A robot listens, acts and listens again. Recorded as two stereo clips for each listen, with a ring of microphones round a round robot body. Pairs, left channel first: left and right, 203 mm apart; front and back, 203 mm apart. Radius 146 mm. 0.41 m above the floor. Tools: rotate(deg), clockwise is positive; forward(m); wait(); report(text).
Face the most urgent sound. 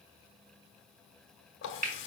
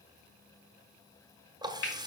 wait()
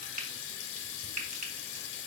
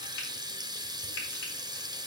wait()
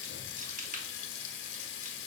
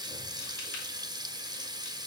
report("I can't make out anything urgent, only a running tap and frying.")